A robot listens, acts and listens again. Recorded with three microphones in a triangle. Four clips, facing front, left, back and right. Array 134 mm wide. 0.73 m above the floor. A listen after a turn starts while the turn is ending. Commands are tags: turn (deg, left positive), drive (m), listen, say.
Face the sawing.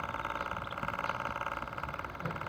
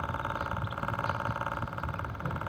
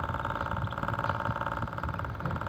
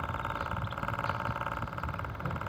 <listen/>
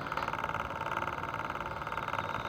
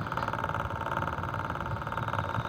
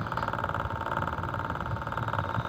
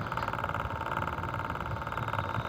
<listen/>
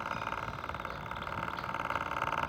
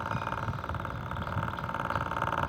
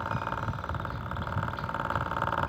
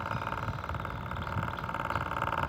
<say>I can't make out sawing.</say>